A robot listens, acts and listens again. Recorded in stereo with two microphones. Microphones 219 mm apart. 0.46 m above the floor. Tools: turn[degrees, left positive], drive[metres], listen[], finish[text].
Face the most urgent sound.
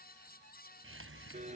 Action: listen[]
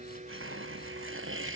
Action: listen[]
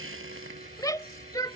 Thought: The shout: about 15° left or 165° left.
Action: turn[15]
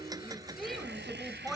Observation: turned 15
Action: finish[Found it: a shout, straight ahead.]